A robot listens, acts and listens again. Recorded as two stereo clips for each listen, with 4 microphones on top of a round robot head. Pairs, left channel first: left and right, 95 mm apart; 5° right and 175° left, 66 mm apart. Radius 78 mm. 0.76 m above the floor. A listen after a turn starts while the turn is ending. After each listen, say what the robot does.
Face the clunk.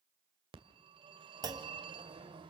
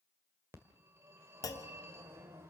Turn 40° right.
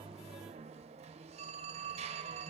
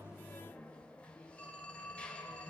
I heard a clunk from this way, but can't make it out now.